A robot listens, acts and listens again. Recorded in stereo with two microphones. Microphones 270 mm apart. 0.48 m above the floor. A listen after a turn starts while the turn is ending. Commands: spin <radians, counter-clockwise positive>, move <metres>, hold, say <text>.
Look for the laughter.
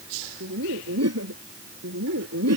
spin -1.22
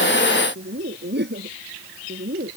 spin -0.61
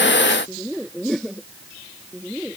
say Found it: laughter, straight ahead.